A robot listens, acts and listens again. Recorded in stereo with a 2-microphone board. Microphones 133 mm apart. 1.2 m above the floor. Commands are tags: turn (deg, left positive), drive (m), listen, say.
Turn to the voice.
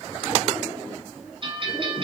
<listen/>
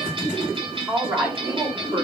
<turn deg="-20"/>
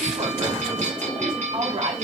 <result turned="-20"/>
<turn deg="-130"/>
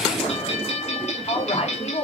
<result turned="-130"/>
<turn deg="50"/>
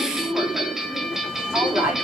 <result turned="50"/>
<turn deg="-10"/>
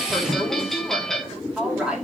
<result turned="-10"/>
<say>Found it: a woman speaking, straight ahead.</say>